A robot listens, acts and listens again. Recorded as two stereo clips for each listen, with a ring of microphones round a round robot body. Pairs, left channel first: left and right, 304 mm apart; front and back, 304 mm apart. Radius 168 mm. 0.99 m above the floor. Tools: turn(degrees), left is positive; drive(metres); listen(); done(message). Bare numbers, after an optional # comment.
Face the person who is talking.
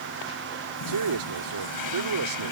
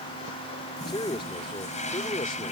# The man speaking: 75° right.
turn(-75)
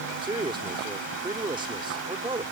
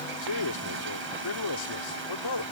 # The man speaking is now 15° right.
turn(-15)
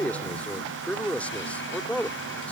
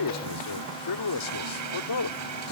done("Facing the man speaking.")